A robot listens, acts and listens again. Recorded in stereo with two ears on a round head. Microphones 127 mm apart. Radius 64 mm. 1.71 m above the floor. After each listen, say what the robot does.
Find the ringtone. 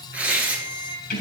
Turn 90° right.
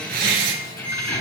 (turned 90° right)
Turn 15° left.
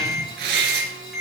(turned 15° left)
Found it: a ringtone, straight ahead, over 4 m away.